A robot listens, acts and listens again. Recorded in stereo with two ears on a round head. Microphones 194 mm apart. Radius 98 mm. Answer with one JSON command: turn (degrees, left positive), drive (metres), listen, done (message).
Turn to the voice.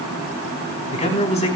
{"turn": 30}
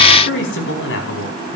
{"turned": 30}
{"turn": 120}
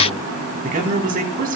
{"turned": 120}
{"turn": -40}
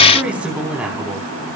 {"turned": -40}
{"done": "Facing the man speaking."}